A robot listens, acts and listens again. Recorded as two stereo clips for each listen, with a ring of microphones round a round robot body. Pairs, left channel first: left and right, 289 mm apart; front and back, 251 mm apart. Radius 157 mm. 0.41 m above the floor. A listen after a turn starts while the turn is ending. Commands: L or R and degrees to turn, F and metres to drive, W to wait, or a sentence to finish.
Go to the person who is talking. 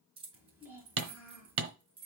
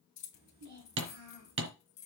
R175
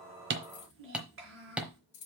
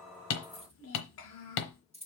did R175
R40
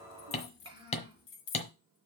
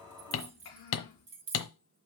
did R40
R15
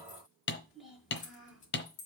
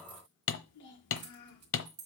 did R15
F1.0
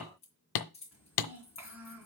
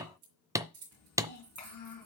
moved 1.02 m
F1.0
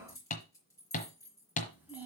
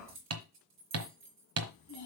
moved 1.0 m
F1.0
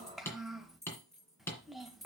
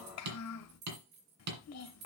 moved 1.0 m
F1.0
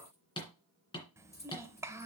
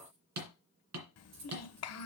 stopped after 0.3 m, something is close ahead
R10
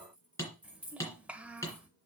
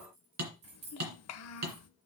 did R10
Arrived at the child speaking, straight ahead.